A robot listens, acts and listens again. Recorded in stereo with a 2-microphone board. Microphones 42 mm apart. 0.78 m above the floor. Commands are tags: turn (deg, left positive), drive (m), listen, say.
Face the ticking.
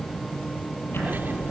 <turn deg="65"/>
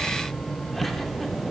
<say>Found it: ticking, straight ahead, over 4 m away.</say>